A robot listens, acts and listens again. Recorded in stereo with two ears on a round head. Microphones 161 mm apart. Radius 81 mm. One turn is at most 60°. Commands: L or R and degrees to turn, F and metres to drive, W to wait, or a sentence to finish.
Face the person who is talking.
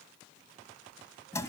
W
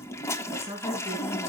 L50
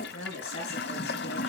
L60
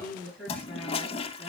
Facing the woman speaking, over 4 m away.